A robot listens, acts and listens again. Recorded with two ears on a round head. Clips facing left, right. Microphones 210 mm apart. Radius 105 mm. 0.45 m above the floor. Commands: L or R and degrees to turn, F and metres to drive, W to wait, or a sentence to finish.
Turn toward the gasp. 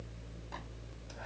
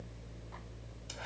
W
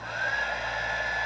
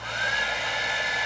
W
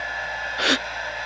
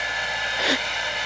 L30
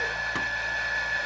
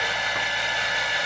W
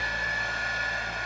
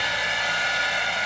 I heard a gasp, but can't make it out now. It was about 20° right or 140° left.